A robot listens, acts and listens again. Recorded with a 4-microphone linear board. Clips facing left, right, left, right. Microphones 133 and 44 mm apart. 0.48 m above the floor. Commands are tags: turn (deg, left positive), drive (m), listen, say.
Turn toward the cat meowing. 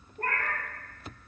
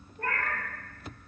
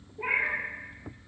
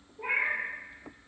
<turn deg="40"/>
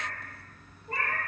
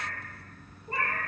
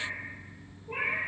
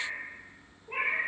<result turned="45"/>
<turn deg="-25"/>
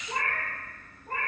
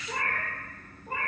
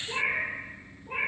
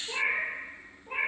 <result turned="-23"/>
<turn deg="-10"/>
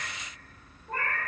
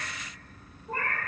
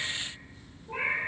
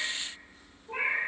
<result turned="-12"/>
<say>Facing the cat meowing, 2 to 4 m away.</say>